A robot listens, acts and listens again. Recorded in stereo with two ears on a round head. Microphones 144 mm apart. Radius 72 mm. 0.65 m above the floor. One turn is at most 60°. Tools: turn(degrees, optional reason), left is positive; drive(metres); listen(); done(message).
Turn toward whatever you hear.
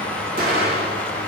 turn(degrees=-60, reason="The explosion: about 60° right or 120° right.")
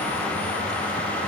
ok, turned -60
listen()
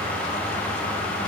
done("I heard an explosion, but can't make it out now. It was about straight ahead or 60° right.")